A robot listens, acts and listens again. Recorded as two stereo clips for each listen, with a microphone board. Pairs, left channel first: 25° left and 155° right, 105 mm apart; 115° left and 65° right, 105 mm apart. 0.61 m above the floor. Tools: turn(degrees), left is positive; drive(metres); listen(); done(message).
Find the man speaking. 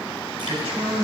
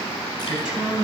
turn(degrees=-150)
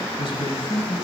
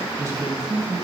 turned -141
turn(degrees=-10)
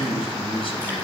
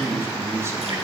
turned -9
done("Facing the man speaking, 2 to 4 m away.")